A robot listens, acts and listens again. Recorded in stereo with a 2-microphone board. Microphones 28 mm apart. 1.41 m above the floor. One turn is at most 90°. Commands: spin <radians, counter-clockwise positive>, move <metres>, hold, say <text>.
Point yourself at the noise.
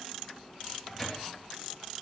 spin 0.52
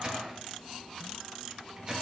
spin -0.52
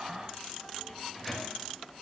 say Found it: a microwave, straight ahead.